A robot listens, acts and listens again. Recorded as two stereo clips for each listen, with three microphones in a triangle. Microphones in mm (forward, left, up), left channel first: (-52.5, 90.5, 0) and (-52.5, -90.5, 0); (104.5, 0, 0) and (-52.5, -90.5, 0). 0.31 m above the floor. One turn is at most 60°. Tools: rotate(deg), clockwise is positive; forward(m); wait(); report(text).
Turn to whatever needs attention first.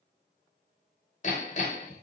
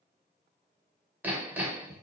wait()
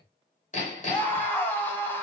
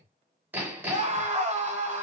rotate(-60)
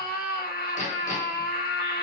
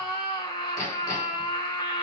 rotate(-60)
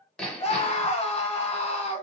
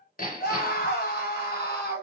rotate(-40)
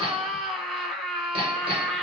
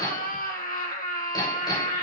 report("Facing the scream, 1 to 2 m away.")